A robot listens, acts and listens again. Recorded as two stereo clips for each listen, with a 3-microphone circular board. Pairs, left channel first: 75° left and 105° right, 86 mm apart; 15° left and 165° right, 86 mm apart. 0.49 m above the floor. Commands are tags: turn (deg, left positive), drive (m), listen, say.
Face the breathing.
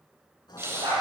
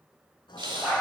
<turn deg="-160"/>
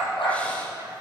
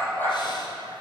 <listen/>
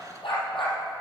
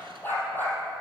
<listen/>
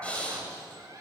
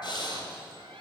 <say>Found it: breathing, straight ahead, 1 to 2 m away.</say>